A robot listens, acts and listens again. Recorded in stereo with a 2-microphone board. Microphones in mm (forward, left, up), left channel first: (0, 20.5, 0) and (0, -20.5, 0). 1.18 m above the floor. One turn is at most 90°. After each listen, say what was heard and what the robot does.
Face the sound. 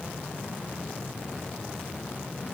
Keep listening.
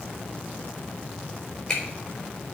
Turn 30° left.
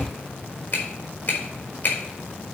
So it is at 140° left. Turn 90° left.
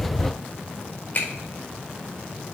The finger snap is now 55° left. Turn 55° left.
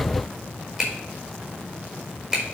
Found it: a finger snap, straight ahead, 2 to 4 m away.